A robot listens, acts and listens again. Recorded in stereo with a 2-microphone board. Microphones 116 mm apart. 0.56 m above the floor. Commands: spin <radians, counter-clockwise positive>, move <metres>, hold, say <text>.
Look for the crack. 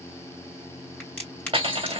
spin 0.52
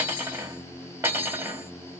hold
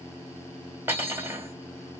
say I heard a crack, but can't make it out now. It was about 15° right or 135° left.